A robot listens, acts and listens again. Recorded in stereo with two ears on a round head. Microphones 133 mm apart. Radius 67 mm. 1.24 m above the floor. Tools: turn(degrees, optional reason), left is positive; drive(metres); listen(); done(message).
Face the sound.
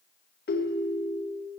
turn(degrees=75, reason="The ringtone: about 75° left or 105° left.")
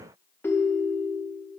turn(degrees=15, reason="So it is at 15° left.")
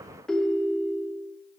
done("Facing the ringtone, under 1 m away.")